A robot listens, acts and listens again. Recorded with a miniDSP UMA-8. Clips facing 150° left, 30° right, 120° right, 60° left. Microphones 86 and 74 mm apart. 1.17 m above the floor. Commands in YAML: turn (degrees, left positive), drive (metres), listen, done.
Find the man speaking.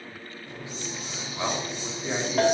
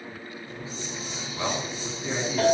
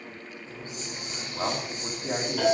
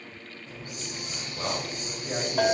turn: -135
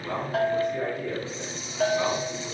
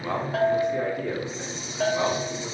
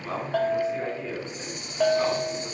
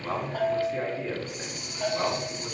turn: -10
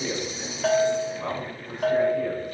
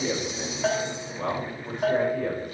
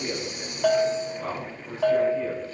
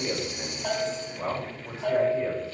done: "Found it: a man speaking, straight ahead."